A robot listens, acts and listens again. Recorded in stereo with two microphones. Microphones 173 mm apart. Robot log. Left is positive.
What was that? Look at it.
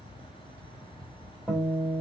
cmd yaw -30
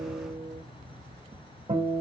note: So it is at 145° right.
cmd yaw -145
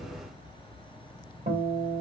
note: The guitar is now 55° right.
cmd yaw -55
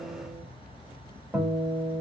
end: Found it: a guitar, straight ahead, 1 to 2 m away.